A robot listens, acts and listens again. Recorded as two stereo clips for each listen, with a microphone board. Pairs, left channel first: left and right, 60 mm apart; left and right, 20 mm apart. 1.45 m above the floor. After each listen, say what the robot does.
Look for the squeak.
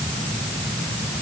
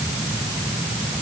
Keep listening.
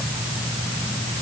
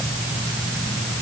Keep listening.
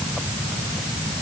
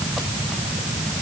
I can't make out a squeak.